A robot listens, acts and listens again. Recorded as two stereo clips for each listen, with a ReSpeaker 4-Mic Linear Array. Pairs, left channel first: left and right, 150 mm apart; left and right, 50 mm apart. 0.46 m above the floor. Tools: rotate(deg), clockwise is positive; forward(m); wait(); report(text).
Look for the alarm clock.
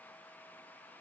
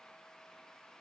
wait()
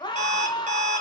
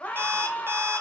rotate(50)
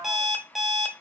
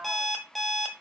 report("Found it: an alarm clock, straight ahead.")